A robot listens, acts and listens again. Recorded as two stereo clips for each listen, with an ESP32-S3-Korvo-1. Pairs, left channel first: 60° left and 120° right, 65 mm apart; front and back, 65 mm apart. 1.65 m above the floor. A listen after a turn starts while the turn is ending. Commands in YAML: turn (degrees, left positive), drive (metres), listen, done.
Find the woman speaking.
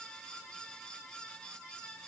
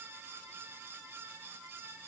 listen: true
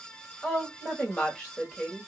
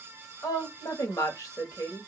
turn: -20
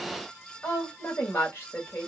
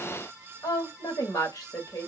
done: "Found it: a woman speaking, straight ahead."